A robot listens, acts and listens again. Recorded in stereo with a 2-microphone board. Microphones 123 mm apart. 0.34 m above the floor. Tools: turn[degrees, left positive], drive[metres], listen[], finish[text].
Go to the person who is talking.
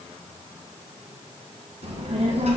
Thought: The child speaking: about 55° right or 125° right.
Action: turn[-55]
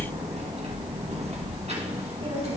Thought: So it is at 65° right.
Action: turn[-65]
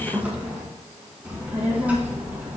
Thought: The child speaking is now 10° right.
Action: turn[-10]
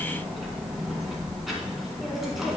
Action: drive[1.0]
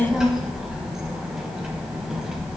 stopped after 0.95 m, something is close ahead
Action: finish[Arrived at the child speaking, straight ahead.]